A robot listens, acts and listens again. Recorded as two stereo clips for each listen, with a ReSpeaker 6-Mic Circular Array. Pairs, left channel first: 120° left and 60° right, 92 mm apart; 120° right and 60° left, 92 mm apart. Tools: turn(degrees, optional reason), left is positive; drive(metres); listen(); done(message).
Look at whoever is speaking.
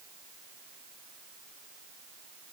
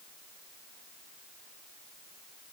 listen()
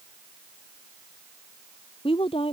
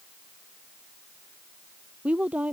turn(degrees=135, reason="The woman speaking: 135° left.")
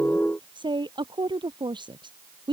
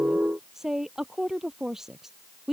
turn(degrees=-25, reason="The woman speaking is now 25° right.")
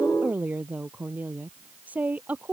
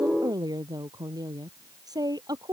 turn(degrees=15, reason="The woman speaking is now 15° left.")
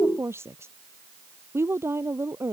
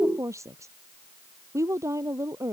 done("Facing the woman speaking.")